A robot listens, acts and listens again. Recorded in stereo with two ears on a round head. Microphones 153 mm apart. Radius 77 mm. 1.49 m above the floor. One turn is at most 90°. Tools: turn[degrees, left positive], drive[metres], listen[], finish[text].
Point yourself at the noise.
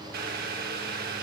Thought: The boiling: about 60° right or 120° right.
Action: turn[-60]
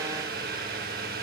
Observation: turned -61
Thought: So it is at 55° right.
Action: turn[-55]
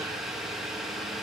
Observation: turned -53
Action: finish[Facing the boiling, 1 to 2 m away.]